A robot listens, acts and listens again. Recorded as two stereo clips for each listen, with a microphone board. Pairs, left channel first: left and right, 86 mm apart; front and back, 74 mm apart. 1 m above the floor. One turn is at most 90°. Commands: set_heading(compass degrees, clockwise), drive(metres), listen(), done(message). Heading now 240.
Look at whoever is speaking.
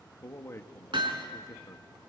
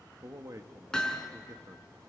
set_heading(150)
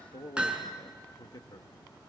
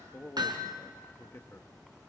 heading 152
set_heading(92)
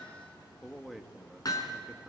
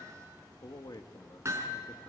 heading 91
done("Facing the man speaking.")